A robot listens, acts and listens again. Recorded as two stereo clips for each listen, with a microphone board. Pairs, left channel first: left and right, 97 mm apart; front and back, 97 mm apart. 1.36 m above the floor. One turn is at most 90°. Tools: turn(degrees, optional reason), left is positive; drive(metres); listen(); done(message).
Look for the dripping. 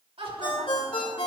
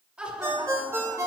listen()
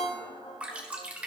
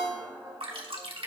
turn(degrees=-90, reason="The dripping: 165° right.")
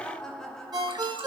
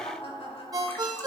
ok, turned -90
turn(degrees=-75, reason="Nothing new. It was at 75° right.")
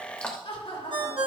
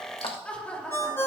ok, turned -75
turn(degrees=10, reason="The dripping is now 10° left.")
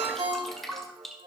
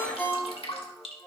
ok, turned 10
done("Found it: dripping, straight ahead.")